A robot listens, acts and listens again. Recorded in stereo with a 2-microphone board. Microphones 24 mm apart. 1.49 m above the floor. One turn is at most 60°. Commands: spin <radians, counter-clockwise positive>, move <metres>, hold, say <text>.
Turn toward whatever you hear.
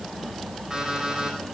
spin -0.35
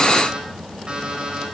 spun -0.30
spin -1.05
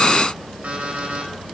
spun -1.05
spin -1.05
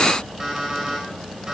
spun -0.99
spin -0.44
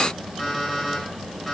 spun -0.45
say Found it: an alarm clock, straight ahead, over 4 m away.